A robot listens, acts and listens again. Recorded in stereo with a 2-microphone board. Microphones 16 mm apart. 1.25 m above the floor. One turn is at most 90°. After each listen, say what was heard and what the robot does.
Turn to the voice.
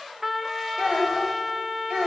Turn 90° right.
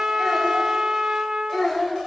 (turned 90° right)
So it is at 15° left. Turn 15° left.
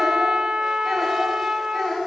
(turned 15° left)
Found it: a child speaking, straight ahead.